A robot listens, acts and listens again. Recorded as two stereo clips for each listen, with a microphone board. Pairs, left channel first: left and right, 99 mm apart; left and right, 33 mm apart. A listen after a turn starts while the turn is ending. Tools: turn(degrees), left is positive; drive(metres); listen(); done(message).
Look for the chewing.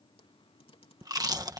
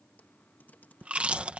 turn(degrees=-40)
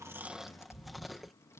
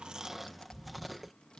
done("Facing the chewing.")